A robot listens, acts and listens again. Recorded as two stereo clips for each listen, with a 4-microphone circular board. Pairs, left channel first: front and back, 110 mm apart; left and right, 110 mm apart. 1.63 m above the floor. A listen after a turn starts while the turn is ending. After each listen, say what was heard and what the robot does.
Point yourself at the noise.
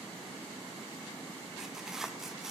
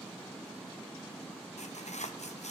The tearing paper: 95° left. Turn 95° left.
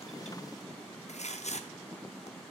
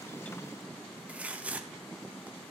The tearing paper is now 10° right. Turn 10° right.
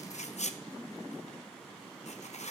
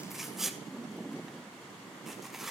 Facing the tearing paper, under 1 m away.